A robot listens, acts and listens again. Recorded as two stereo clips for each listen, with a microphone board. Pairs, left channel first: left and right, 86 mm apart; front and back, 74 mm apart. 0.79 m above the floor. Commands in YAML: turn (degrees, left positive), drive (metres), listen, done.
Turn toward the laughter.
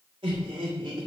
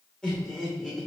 turn: -85
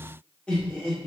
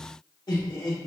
turn: 10
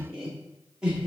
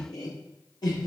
turn: -15
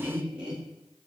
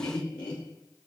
turn: -10
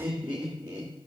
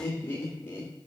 turn: -25
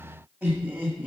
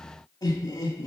turn: -10
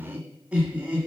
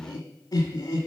done: "Found it: laughter, straight ahead."